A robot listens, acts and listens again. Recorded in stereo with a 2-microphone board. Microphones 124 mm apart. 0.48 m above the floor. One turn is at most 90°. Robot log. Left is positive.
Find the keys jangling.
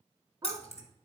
note: The keys jangling: about 55° left or 125° left.
cmd yaw +55
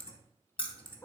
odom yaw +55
note: So it is at 45° left.
cmd yaw +45
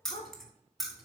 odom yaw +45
end: Facing the keys jangling, 2 to 4 m away.